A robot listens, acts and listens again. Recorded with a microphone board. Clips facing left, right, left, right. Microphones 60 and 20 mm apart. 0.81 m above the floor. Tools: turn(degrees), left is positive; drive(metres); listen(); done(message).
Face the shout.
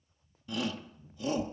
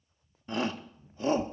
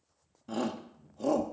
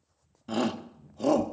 turn(degrees=-35)
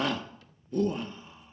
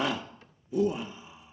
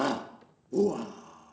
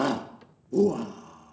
done("Facing the shout, 1 to 2 m away.")